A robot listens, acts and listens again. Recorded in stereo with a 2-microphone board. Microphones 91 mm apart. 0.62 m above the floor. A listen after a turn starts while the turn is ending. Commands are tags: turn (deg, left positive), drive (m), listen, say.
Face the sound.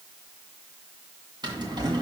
<turn deg="-55"/>
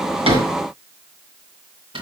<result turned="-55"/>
<turn deg="-70"/>
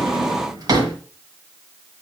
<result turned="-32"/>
<turn deg="-40"/>
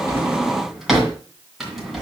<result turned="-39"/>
<say>Facing the drawer, 2 to 4 m away.</say>